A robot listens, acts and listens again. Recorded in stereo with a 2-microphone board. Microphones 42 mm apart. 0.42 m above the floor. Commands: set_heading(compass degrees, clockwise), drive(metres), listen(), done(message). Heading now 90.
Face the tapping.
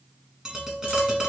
set_heading(105)
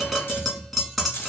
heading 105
done("Found it: tapping, straight ahead.")